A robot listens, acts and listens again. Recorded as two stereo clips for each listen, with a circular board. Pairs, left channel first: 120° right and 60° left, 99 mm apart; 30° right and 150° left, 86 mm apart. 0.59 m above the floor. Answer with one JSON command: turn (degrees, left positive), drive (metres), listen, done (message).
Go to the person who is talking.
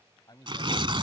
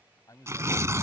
{"turn": -75}
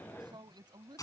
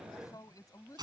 {"turn": 15}
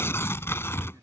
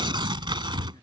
{"listen": true}
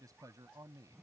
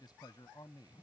{"drive": 1.0}
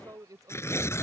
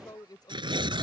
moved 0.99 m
{"drive": 1.0}
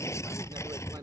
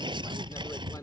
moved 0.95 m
{"turn": 15}
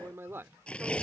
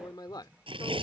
{"drive": 1.0}
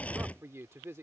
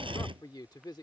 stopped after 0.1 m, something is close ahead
{"done": "I am next to the man speaking."}